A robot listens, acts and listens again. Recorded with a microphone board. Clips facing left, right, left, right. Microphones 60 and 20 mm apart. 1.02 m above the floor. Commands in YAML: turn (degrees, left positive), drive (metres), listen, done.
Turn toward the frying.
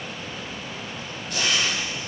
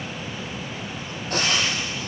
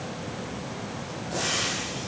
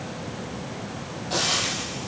turn: -50
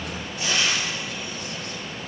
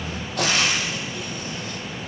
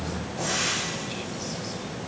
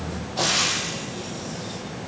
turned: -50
turn: -80
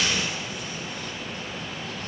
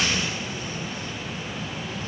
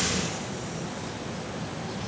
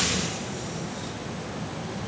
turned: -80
listen: true
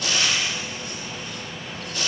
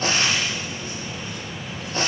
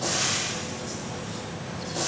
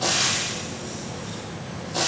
turn: -35
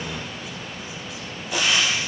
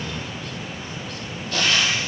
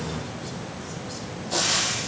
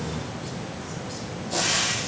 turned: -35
turn: 15
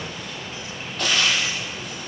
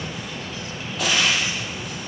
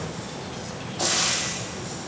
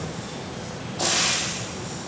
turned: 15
done: "Found it: frying, straight ahead."